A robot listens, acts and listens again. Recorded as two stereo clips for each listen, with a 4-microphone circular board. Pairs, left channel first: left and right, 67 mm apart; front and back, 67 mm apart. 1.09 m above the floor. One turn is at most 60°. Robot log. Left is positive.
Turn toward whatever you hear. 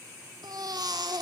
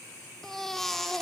note: The baby crying: 85° right.
cmd yaw -60
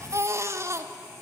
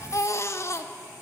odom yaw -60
note: The baby crying is now 45° right.
cmd yaw -45
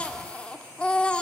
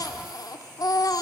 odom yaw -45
note: The baby crying is now 20° left.
cmd yaw +20
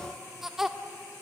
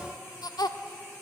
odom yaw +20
end: Facing the baby crying, 1 to 2 m away.